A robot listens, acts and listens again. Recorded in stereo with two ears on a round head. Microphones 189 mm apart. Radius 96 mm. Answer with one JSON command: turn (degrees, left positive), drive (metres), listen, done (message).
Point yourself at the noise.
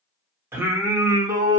{"turn": -20}
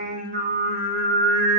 {"turn": -120}
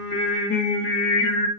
{"turn": 45}
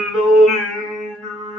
{"done": "Facing the singing, 1 to 2 m away."}